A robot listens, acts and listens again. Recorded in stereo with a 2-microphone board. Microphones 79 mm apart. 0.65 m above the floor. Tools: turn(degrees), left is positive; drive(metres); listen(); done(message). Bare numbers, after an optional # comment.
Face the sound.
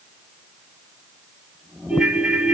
turn(-30)
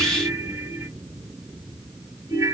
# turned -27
# So it is at 145° right.
turn(-145)
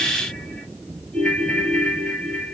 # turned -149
done("Facing the ringtone.")